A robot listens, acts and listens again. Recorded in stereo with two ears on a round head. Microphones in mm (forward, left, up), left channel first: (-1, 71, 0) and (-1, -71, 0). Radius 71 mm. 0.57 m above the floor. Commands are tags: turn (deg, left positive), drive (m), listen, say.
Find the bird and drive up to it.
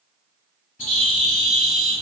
<turn deg="50"/>
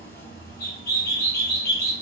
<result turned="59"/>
<turn deg="75"/>
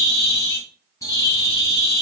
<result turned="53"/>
<turn deg="20"/>
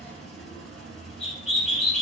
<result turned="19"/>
<drive m="1.0"/>
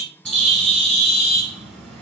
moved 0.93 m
<drive m="1.0"/>
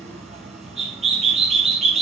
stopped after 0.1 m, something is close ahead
<say>Arrived at the bird, straight ahead.</say>